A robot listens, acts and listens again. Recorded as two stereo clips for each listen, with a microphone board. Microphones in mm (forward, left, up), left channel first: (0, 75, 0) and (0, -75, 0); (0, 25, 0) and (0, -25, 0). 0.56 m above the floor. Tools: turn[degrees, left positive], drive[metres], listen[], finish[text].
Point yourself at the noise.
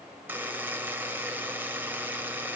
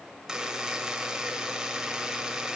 Action: turn[-30]
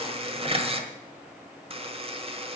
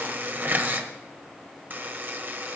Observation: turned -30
Thought: So it is at 140° right.
Action: turn[-140]
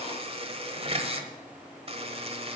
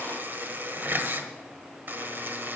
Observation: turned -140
Thought: The buzzer is now 40° right.
Action: turn[-40]
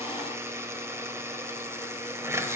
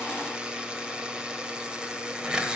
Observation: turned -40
Thought: The buzzer is now 20° right.
Action: turn[-20]
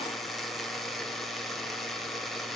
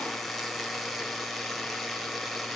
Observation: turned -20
Action: finish[Facing the buzzer, 1 to 2 m away.]